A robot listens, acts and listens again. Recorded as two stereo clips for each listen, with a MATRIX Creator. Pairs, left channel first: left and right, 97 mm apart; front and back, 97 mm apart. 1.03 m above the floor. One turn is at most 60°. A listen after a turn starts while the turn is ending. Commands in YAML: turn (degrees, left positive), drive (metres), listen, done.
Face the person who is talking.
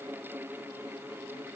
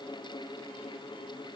listen: true
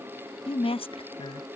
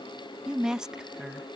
turn: 60
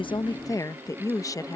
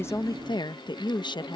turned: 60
turn: 35
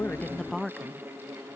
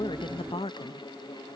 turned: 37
done: "Facing the woman speaking."